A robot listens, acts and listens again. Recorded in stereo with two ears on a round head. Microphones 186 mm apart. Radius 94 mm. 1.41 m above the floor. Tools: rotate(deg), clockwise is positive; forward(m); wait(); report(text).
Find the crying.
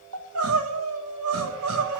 rotate(90)
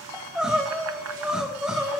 report("Found it: crying, straight ahead, 1 to 2 m away.")